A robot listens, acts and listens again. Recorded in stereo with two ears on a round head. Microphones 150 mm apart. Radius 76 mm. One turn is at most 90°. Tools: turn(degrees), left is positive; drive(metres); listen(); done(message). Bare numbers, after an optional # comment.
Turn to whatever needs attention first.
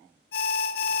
# The alarm: about 60° left or 120° left.
turn(60)
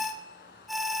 done("Found it: an alarm, straight ahead, 1 to 2 m away.")